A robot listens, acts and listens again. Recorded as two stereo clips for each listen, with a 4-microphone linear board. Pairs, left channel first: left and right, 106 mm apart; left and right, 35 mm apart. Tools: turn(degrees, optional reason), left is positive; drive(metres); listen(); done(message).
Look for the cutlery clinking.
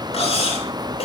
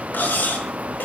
turn(degrees=70, reason="The cutlery clinking: about 70° left or 110° left.")
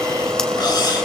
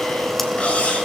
listen()
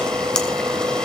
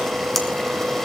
listen()
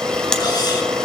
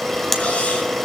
done("I heard cutlery clinking, but can't make it out now. It was about straight ahead or 40° left.")